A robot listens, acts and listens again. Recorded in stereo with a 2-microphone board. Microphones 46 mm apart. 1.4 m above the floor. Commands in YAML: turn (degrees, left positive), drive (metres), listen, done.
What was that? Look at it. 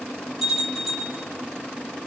turn: -30
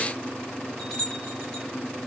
turn: 15
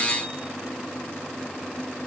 listen: true
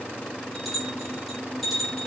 done: "Facing the bell, 2 to 4 m away."